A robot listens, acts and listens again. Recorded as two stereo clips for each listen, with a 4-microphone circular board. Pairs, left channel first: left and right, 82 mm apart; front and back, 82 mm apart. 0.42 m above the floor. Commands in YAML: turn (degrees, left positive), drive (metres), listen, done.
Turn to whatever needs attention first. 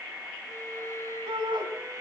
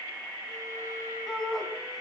turn: -90
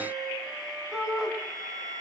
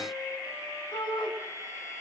done: "Facing the shout."